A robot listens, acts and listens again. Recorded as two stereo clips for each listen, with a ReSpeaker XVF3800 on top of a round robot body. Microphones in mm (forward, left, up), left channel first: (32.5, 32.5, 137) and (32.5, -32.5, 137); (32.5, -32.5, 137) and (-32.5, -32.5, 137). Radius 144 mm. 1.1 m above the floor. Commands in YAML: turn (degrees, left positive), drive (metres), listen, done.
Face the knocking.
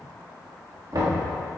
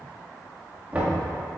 turn: -115
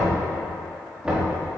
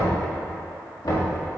turn: -15
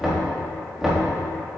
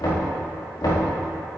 done: "Facing the knocking."